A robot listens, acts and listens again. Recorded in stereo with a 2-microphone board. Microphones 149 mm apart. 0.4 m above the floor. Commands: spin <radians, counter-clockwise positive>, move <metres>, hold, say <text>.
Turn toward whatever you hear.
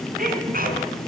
spin -1.31
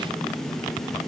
hold
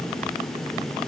say I heard a sneeze, but can't make it out now. It was about straight ahead or 30° right.